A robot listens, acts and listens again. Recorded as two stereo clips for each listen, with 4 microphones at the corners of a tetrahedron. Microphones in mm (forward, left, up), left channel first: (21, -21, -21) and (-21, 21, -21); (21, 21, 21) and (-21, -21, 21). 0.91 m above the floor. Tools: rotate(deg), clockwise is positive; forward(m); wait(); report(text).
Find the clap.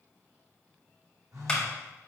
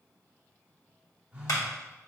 rotate(-30)
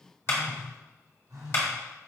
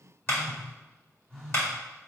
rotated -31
report("Facing the clap.")